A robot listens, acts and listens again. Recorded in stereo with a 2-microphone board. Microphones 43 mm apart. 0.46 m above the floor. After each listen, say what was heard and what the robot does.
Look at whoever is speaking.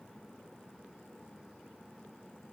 Keep listening.
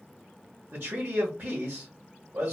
The man speaking: about 60° right or 120° right. Turn 60° right.
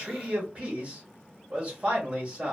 So it is at 35° right. Turn 35° right.
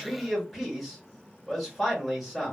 Facing the man speaking.